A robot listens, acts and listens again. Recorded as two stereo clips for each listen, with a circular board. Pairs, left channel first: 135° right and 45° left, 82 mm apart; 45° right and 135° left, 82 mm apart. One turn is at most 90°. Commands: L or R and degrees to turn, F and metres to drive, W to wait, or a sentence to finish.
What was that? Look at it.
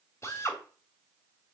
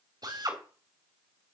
L90
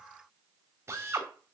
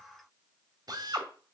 L90
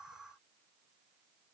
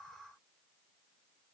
L10
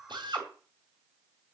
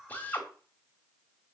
L25
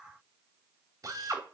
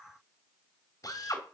Facing the drill, 2 to 4 m away.